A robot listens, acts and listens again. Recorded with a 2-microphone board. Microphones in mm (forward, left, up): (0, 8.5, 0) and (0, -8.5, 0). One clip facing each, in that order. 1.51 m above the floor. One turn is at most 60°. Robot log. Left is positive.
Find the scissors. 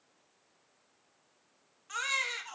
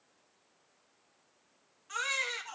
cmd idle
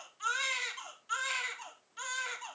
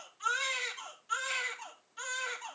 cmd idle
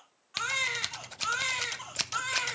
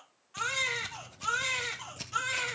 note: The scissors: about 75° left or 105° left.
cmd yaw +60
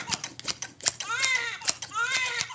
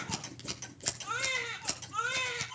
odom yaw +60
note: So it is at 45° left.
cmd yaw +45
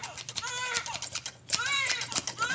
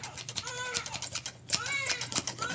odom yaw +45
end: Found it: scissors, straight ahead, under 1 m away.